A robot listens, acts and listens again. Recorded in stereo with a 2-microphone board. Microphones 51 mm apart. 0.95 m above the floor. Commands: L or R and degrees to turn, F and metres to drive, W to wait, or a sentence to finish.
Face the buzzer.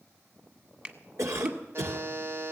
R50
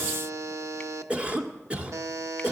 R80
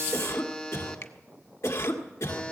L20
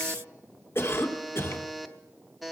Facing the buzzer.